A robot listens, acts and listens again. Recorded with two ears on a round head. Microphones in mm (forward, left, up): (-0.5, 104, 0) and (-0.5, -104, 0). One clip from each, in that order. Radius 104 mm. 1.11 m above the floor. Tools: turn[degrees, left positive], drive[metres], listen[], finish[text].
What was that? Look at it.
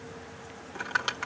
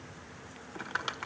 Action: turn[30]
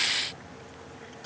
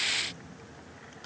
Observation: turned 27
Action: listen[]
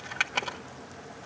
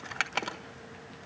Thought: So it is at 15° right.
Action: turn[-15]
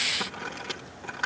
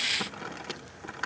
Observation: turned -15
Action: finish[Found it: crumpling, straight ahead.]